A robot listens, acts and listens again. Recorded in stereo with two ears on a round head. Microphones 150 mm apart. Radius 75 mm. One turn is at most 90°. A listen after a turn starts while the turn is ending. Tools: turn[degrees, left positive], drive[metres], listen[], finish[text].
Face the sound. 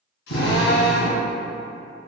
Action: turn[90]
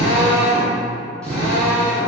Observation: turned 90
Action: finish[Facing the drill.]